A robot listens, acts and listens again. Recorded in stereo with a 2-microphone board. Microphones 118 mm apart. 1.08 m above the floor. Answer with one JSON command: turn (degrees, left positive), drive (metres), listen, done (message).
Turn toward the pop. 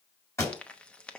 {"turn": 25}
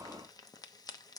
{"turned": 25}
{"listen": true}
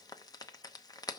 {"done": "I heard a pop, but can't make it out now. It was about straight ahead or 130° left."}